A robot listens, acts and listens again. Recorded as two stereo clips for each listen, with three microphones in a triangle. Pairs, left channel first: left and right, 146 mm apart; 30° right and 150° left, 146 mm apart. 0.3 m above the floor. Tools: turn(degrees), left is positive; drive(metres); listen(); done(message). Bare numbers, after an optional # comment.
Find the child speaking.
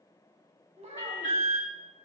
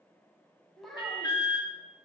# The child speaking: 120° right.
turn(-120)
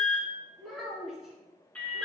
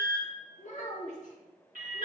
done("Found it: a child speaking, straight ahead.")